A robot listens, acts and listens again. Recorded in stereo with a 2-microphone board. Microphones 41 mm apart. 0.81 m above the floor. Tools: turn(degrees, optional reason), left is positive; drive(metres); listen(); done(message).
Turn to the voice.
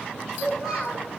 turn(degrees=30)
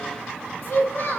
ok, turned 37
turn(degrees=135, reason="So it is at 135° left.")
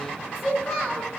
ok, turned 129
done("Facing the child speaking, 2 to 4 m away.")